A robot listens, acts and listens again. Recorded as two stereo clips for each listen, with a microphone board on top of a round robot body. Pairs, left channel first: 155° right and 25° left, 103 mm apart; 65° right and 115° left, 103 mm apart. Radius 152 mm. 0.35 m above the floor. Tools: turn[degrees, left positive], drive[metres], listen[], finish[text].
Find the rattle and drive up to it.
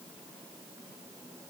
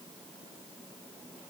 Action: listen[]
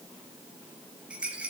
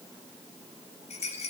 Thought: The rattle: 55° right.
Action: turn[-55]
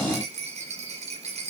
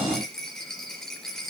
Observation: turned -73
Thought: The rattle is now 15° left.
Action: turn[15]
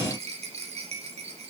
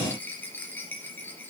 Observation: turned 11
Action: drive[1.0]
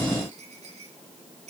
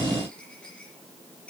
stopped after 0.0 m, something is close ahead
Thought: The rattle is now 10° left.
Action: turn[10]
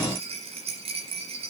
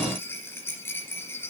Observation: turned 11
Action: finish[Something is in my way. I am facing the rattle but have not reached it.]